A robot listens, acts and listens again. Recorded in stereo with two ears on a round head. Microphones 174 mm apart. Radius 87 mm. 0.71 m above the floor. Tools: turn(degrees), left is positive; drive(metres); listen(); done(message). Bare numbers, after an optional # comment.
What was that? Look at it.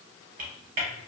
# The typing on a keyboard: about 50° right or 130° right.
turn(-50)
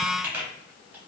# So it is at 10° right.
turn(-10)
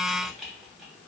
done("Found it: typing on a keyboard, straight ahead, under 1 m away.")